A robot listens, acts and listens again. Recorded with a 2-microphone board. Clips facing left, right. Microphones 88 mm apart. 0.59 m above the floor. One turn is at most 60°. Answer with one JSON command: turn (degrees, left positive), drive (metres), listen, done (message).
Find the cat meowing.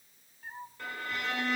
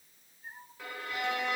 {"turn": 60}
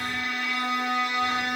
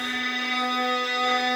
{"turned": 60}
{"listen": true}
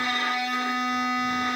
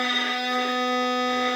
{"listen": true}
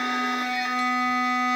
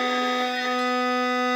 {"done": "I heard a cat meowing, but can't make it out now. It was about 5° left or 55° left."}